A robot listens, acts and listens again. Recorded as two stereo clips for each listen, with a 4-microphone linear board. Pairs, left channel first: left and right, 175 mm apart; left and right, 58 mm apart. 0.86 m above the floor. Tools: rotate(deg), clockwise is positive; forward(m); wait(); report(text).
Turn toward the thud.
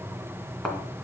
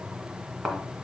rotate(-30)
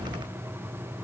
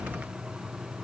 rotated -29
wait()
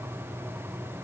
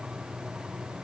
report("I heard a thud, but can't make it out now. It was about 25° right or 145° left.")